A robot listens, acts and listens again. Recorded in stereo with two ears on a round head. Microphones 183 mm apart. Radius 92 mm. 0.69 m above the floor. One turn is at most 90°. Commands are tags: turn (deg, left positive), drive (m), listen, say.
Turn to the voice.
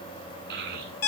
<turn deg="-55"/>
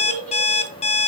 <turn deg="-70"/>
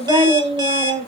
<turn deg="-30"/>
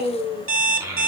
<turn deg="-15"/>
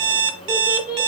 <say>Facing the child speaking, 1 to 2 m away.</say>